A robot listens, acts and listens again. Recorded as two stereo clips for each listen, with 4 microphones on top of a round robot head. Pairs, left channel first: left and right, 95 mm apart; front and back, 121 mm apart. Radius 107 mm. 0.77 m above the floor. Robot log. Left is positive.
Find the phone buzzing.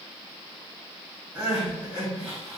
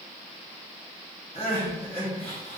cmd idle
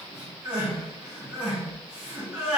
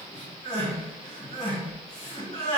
cmd idle
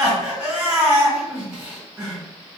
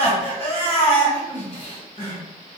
end: I can't make out a phone buzzing to turn to.